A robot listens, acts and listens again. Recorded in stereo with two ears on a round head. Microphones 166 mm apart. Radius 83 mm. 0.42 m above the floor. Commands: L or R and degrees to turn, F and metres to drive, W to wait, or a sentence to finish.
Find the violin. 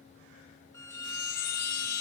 L15
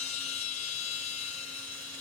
W
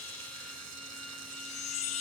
W
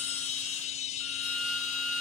Found it: a violin, straight ahead.